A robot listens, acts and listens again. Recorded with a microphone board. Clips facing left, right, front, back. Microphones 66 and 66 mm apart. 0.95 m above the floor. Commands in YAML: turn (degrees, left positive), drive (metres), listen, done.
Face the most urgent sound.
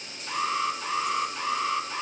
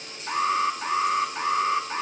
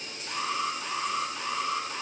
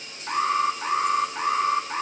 turn: -140
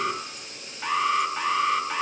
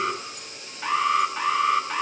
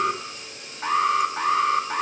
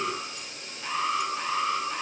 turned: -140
done: "Facing the alarm, 2 to 4 m away."